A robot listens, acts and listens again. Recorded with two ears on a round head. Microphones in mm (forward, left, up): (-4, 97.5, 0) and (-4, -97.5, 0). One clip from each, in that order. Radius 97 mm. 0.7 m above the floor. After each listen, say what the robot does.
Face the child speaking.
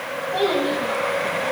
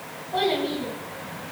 Turn 30° left.
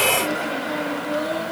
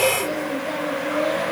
Turn 160° left.
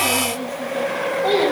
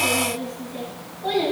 Turn 15° left.
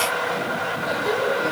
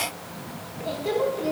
Found it: a child speaking, straight ahead.